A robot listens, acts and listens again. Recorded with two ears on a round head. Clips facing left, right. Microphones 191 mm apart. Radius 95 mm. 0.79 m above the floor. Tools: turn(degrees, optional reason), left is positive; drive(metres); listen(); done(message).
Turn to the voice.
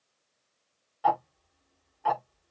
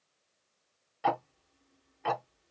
listen()
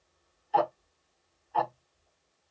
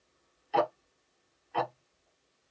listen()
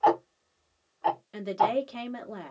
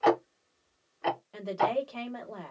turn(degrees=20, reason="The woman speaking: about 20° left or 160° left.")
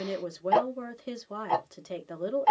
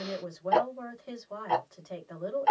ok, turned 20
turn(degrees=135, reason="So it is at 135° left.")
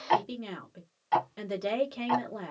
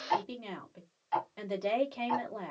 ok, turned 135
turn(degrees=15, reason="The woman speaking is now 15° left.")
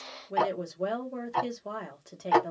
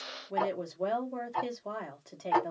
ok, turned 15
done("Found it: a woman speaking, straight ahead, 1 to 2 m away.")